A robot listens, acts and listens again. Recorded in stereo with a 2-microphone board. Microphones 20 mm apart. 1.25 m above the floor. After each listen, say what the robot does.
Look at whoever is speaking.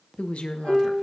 Turn 65° left.
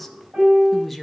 Found it: a woman speaking, straight ahead.